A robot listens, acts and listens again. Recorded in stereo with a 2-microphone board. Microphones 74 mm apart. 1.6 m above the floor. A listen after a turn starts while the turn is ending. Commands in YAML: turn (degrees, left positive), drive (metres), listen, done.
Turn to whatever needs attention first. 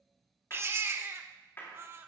turn: -30
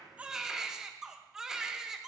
done: "Facing the baby crying, 1 to 2 m away."